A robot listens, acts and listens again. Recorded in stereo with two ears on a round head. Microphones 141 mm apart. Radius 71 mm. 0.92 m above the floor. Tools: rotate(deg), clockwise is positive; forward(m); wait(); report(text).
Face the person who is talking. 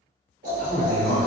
rotate(-50)
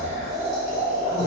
wait()
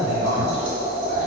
rotate(-25)
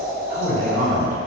rotate(55)
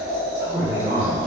rotate(10)
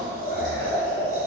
wait()
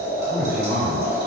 report("Facing the man speaking, 1 to 2 m away.")